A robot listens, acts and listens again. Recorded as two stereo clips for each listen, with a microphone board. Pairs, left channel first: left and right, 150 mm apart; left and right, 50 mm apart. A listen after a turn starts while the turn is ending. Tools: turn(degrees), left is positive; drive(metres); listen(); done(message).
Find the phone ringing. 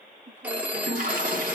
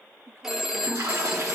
turn(degrees=-30)
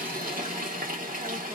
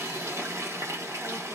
listen()
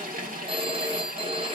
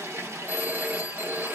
turn(degrees=-140)
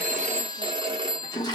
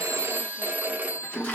turn(degrees=-35)
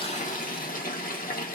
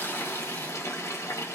turn(degrees=20)
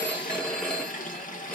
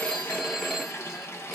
done("Facing the phone ringing.")